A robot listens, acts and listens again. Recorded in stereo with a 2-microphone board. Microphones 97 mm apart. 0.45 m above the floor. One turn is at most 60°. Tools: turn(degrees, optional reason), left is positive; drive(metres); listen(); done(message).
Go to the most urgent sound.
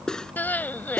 turn(degrees=20, reason="The crying: about 20° left or 160° left.")
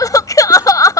turn(degrees=60, reason="So it is at 140° left.")
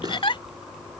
turn(degrees=60, reason="The crying is now 105° left.")
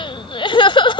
turn(degrees=60, reason="The crying is now 70° left.")
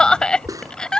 turn(degrees=10, reason="The crying is now 10° left.")
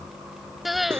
drive(metres=1.0)
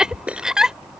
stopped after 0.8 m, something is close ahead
turn(degrees=-10, reason="The crying is now 10° right.")
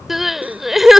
done("Arrived at the crying, straight ahead.")